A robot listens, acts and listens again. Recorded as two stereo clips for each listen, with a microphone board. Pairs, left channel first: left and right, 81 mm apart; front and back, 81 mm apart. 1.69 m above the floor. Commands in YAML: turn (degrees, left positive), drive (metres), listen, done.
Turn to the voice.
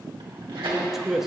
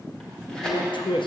done: "Found it: a man speaking, straight ahead, under 1 m away."